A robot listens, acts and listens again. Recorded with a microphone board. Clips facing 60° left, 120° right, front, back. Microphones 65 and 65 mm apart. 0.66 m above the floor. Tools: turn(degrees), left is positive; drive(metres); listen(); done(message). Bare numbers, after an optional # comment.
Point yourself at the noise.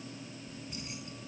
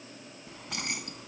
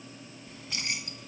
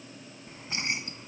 # The keys jangling: 120° right.
turn(-120)
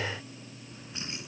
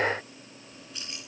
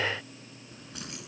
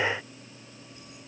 done("Found it: keys jangling, straight ahead.")